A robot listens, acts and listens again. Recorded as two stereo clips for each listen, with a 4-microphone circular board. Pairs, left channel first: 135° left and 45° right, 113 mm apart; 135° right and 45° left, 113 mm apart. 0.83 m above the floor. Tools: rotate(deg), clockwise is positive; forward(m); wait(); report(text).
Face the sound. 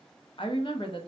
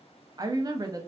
rotate(-100)
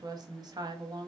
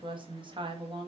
report("Facing the woman speaking, under 1 m away.")